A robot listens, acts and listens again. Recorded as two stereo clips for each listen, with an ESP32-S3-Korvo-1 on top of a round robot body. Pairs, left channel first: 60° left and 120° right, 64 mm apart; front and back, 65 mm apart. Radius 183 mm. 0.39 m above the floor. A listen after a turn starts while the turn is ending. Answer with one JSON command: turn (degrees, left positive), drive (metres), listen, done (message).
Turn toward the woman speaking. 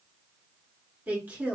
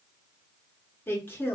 {"turn": -55}
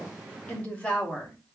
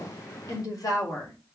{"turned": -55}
{"turn": -10}
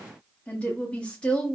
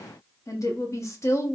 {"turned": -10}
{"turn": -10}
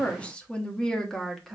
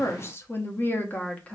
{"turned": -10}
{"turn": -30}
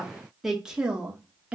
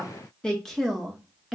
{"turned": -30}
{"turn": -85}
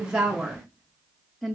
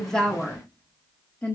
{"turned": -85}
{"turn": -20}
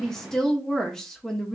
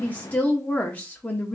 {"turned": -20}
{"done": "Facing the woman speaking."}